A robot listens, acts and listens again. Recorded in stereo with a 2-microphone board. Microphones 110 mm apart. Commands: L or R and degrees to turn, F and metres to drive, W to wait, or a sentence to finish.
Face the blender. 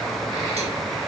W
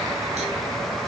W
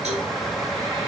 I can't make out a blender to turn to.